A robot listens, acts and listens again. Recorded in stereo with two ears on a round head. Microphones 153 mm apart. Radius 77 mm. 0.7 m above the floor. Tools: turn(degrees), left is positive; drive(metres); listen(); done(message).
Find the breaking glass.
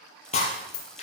turn(degrees=40)
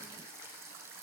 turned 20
listen()
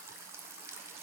done("I heard breaking glass, but can't make it out now. It was about 20° left or 120° left.")